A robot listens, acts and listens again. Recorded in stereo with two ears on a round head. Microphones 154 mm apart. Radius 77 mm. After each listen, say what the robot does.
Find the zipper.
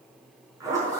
Turn 20° right.
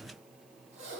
Turn 140° right.
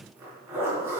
Turn 15° right.
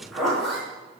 Facing the zipper, over 4 m away.